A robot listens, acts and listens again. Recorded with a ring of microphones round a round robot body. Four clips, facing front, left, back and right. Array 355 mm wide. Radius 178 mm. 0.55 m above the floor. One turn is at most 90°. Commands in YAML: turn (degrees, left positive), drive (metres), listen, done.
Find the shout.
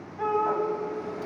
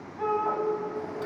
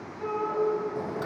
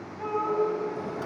turn: 25
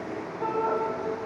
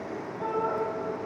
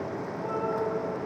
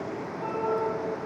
turn: 10
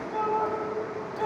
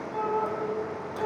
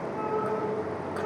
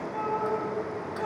done: "Facing the shout, over 4 m away."